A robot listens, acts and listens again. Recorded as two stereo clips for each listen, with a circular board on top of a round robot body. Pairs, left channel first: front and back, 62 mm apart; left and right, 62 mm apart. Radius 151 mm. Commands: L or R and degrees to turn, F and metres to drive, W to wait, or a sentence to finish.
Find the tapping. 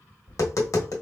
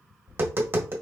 R35
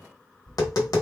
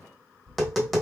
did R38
Found it: tapping, straight ahead, 1 to 2 m away.